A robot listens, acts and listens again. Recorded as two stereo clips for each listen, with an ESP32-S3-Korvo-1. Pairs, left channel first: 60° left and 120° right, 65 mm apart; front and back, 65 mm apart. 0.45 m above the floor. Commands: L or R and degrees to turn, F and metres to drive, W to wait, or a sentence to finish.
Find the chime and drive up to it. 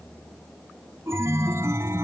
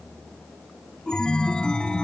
R75
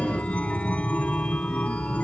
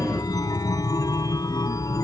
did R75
R10
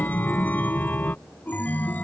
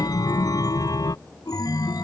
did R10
F1.0
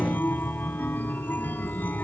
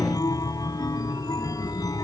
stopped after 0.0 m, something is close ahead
Something is in my way. I am facing the chime but have not reached it.